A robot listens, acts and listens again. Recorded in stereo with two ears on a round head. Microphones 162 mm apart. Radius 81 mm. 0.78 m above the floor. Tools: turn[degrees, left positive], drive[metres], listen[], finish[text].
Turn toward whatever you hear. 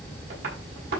Thought: The tapping: about 60° right or 120° right.
Action: turn[-60]
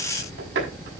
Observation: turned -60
Thought: So it is at 65° right.
Action: turn[-65]
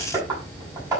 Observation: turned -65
Thought: The tapping is now 20° right.
Action: turn[-20]
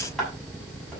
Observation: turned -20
Action: finish[Facing the tapping.]